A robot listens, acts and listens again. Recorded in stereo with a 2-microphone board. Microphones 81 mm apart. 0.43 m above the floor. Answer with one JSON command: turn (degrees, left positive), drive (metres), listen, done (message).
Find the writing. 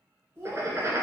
{"turn": -35}
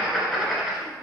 {"done": "Facing the writing, under 1 m away."}